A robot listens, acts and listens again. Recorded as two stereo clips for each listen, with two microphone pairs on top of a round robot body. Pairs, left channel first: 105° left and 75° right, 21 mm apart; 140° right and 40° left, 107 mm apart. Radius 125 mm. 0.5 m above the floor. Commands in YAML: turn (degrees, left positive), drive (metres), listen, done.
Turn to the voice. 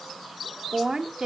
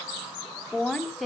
turn: -45
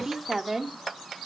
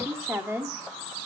turn: -20
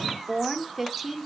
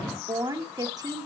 done: "Found it: a woman speaking, straight ahead, 1 to 2 m away."